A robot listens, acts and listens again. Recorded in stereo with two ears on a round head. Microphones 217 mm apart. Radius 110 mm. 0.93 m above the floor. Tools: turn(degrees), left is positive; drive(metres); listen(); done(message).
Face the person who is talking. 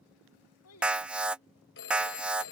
turn(degrees=70)
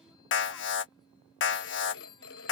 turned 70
listen()
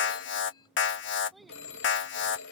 done("Found it: a child speaking, straight ahead.")